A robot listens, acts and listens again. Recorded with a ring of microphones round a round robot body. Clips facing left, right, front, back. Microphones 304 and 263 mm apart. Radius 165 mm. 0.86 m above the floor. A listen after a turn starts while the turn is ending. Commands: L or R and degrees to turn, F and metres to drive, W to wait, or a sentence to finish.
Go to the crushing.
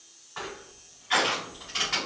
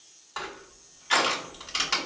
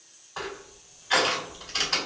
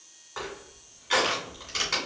R115
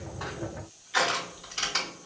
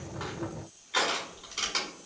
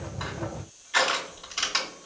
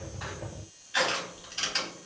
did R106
R10
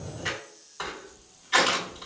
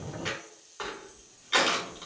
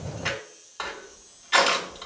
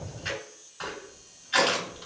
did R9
F1.0
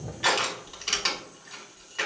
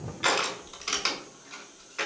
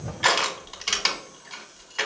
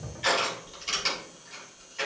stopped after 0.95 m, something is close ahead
I am next to the crushing.